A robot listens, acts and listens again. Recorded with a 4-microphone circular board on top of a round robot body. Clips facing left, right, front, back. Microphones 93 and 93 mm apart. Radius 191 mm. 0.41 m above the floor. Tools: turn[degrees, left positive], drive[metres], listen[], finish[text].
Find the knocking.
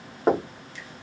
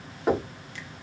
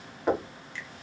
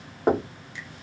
Thought: The knocking: 135° left.
Action: turn[135]
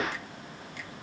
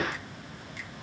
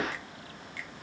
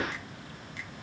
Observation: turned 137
Action: finish[Found it: knocking, straight ahead.]